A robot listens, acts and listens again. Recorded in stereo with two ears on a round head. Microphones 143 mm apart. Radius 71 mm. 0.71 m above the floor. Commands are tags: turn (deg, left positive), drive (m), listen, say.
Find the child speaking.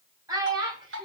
<turn deg="-25"/>
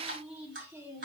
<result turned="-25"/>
<listen/>
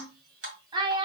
<turn deg="-30"/>
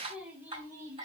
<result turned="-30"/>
<turn deg="-10"/>
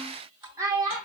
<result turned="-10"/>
<turn deg="-25"/>
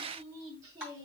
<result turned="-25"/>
<listen/>
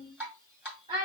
<turn deg="-25"/>
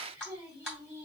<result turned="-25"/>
<turn deg="-10"/>
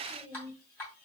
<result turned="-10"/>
<listen/>
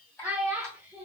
<say>Found it: a child speaking, straight ahead.</say>